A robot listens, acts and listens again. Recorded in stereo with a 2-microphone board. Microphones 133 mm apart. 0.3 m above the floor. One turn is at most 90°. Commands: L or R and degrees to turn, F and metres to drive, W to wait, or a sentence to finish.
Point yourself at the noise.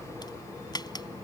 L35
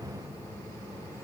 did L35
W
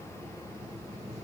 I heard a crack, but can't make it out now. It was about straight ahead or 110° left.